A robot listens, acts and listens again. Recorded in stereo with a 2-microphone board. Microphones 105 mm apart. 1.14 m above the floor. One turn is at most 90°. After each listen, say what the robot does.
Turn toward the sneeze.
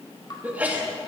Turn 15° right.
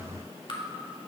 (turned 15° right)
Keep listening.
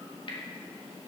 I heard a sneeze, but can't make it out now. It was about straight ahead or 150° right.